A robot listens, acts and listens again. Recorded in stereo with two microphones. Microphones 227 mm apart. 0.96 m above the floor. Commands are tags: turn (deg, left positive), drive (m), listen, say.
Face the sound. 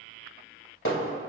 <turn deg="65"/>
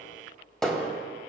<say>Found it: hammering, straight ahead, 1 to 2 m away.</say>